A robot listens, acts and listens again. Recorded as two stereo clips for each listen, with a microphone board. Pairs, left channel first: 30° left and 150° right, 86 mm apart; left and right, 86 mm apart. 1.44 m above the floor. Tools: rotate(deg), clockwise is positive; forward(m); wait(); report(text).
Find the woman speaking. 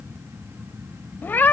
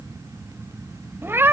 wait()
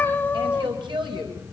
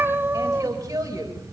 rotate(140)
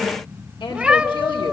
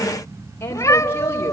rotate(-30)
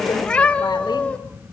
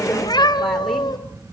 wait()
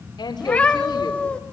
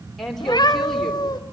report("Found it: a woman speaking, straight ahead, over 4 m away.")